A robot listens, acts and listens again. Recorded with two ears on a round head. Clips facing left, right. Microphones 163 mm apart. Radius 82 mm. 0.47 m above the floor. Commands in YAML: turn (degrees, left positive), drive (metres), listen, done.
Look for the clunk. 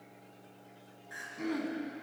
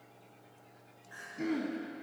listen: true
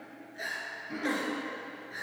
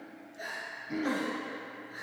listen: true
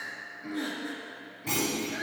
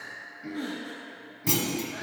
turn: -55
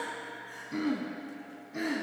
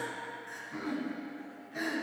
listen: true
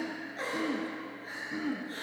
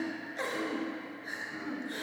done: "I heard a clunk, but can't make it out now. It was about straight ahead or 70° right."